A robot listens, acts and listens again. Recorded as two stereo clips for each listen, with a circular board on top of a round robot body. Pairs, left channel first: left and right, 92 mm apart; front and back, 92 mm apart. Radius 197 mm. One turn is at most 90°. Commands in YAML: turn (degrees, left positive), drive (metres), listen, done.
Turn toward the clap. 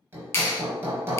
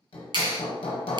turn: 90
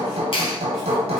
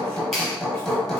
turn: 90
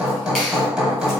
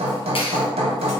listen: true
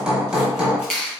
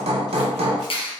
done: "Facing the clap, 1 to 2 m away."